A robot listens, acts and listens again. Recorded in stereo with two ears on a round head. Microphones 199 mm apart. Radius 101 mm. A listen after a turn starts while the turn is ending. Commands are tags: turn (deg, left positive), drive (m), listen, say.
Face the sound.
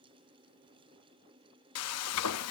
<turn deg="70"/>
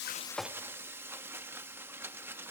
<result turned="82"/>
<turn deg="-10"/>
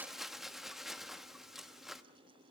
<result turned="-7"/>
<say>Facing the frying, under 1 m away.</say>